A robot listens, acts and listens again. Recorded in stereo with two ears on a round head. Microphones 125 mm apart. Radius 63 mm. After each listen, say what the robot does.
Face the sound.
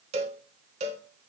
Turn 50° right.
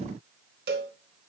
Turn 80° right.
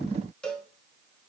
Found it: a cowbell, straight ahead.